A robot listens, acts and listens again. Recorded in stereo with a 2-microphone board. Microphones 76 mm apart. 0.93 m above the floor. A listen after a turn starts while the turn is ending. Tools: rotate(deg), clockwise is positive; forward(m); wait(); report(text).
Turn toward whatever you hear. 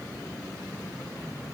wait()
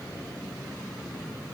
wait()
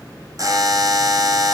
rotate(50)
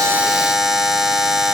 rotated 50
report("Found it: a buzzer, straight ahead, 2 to 4 m away.")